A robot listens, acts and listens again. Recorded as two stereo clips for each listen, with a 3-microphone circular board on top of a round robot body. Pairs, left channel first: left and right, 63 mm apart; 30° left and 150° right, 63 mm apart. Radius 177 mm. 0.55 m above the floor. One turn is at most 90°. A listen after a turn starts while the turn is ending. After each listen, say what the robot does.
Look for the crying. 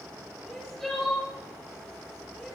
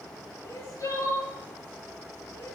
Turn 10° left.
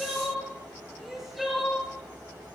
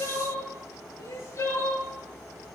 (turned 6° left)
Found it: crying, straight ahead, over 4 m away.